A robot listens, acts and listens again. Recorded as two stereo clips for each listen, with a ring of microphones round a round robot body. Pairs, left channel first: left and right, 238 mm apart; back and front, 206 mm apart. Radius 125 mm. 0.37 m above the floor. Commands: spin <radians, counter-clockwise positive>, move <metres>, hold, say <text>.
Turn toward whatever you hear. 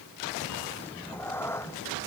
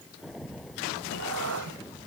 spin 0.17
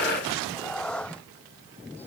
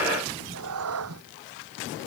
say Facing the cat meowing.